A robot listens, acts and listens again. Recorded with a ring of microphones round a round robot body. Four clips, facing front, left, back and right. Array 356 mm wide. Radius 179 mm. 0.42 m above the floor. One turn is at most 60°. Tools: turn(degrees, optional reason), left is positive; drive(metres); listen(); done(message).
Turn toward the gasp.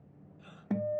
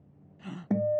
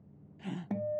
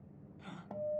turn(degrees=60, reason="The gasp: 150° left.")
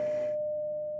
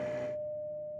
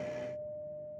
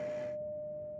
turn(degrees=60, reason="Nothing new. It was at 90° left.")
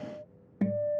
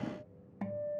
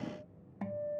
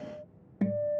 turn(degrees=30, reason="Nothing new. It was at 30° left.")
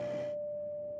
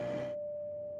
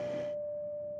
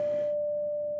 done("I heard a gasp from this way, but can't make it out now.")